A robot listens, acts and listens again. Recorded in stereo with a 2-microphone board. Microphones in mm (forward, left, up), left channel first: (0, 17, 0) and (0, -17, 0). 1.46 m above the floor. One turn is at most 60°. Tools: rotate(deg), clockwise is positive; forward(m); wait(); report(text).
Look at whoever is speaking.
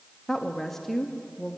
rotate(-30)
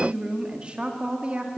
rotate(35)
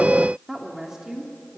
rotate(15)
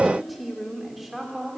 report("Facing the woman speaking.")